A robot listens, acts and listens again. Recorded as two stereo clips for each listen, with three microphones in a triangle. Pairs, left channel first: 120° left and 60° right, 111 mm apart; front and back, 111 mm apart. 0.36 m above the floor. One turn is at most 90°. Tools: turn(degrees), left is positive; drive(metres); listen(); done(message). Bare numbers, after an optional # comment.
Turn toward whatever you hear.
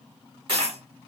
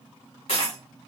# The dropped coin: 20° right.
turn(-20)
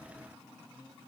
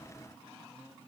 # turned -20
done("I heard a dropped coin from this way, but can't make it out now.")